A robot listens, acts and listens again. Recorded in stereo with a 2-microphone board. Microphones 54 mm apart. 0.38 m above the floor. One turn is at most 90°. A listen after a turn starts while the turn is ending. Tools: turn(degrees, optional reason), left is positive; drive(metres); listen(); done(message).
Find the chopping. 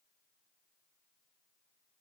listen()
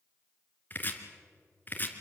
turn(degrees=35, reason="The chopping: about 35° left or 145° left.")
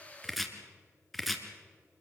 done("Found it: chopping, straight ahead, 1 to 2 m away.")